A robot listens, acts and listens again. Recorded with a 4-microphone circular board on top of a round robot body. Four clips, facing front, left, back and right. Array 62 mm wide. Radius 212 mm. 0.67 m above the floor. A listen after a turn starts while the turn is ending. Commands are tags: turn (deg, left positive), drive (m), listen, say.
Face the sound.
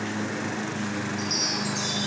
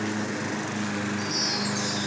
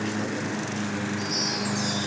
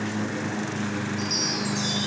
<turn deg="-60"/>
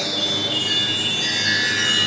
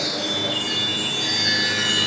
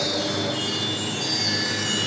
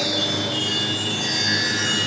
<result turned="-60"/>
<turn deg="10"/>
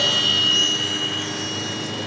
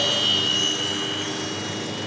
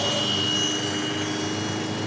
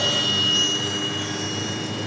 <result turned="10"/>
<say>Facing the chime.</say>